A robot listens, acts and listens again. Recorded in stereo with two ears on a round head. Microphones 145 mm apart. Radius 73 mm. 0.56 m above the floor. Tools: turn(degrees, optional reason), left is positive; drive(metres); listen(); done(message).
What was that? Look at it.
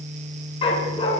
turn(degrees=35, reason="The dog barking: about 35° left or 145° left.")
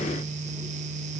listen()
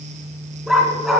done("Facing the dog barking, 1 to 2 m away.")